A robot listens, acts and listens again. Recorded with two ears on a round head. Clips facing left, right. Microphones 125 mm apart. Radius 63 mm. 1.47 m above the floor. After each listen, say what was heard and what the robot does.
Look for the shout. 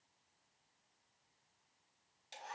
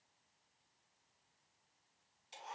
Keep listening.
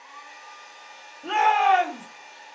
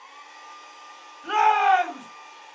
The shout: about 60° left or 120° left. Turn 60° left.
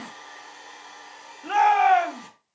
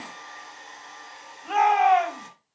So it is at 60° left. Turn 60° left.
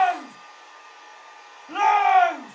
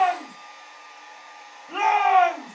Found it: a shout, straight ahead, over 4 m away.